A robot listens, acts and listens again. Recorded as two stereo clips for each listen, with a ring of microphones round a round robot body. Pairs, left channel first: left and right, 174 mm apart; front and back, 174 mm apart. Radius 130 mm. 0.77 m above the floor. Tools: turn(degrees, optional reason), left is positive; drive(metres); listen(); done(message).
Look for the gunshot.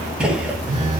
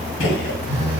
done("Found it: a gunshot, straight ahead, under 1 m away.")